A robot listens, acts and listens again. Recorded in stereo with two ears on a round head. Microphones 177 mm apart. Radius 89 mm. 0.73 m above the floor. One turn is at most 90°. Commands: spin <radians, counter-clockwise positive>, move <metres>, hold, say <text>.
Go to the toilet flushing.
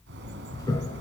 spin 0.35
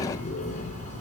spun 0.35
hold
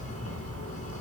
hold
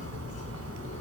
say I heard a toilet flushing, but can't make it out now. It was about straight ahead or 140° left. I did not reach it.